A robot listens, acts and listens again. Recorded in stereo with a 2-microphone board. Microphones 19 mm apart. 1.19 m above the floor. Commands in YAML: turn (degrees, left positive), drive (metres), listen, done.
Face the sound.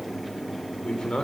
turn: 60
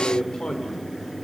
turn: 55
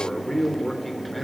turn: 10
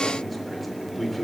done: "Found it: a man speaking, straight ahead."